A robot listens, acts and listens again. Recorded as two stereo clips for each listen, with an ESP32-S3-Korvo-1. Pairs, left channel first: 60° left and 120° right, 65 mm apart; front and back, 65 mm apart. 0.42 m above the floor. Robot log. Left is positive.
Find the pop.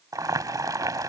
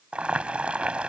cmd idle
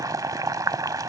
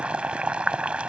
cmd idle
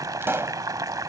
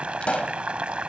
note: The pop: 70° right.
cmd yaw -70
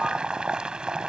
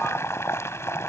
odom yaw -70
end: I heard a pop from this way, but can't make it out now.